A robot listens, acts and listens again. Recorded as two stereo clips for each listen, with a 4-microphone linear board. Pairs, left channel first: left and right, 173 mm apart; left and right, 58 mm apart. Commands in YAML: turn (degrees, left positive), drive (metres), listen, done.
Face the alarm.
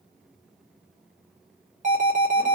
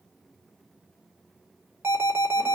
turn: -45
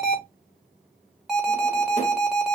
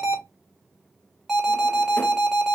done: "Found it: an alarm, straight ahead."